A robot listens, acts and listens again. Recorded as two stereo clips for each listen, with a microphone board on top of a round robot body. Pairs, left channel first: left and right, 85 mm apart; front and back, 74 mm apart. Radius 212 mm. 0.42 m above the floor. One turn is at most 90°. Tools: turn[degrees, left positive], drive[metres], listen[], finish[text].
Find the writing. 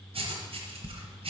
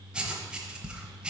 Thought: The writing: 100° right.
Action: turn[-90]
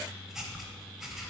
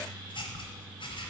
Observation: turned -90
Action: finish[Found it: writing, straight ahead.]